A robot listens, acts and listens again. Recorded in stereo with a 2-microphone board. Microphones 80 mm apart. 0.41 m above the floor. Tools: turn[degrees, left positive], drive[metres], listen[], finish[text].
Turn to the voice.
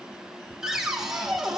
Action: listen[]
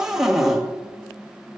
Action: listen[]
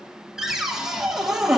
Action: finish[I can't make out anyone speaking, only a cupboard door.]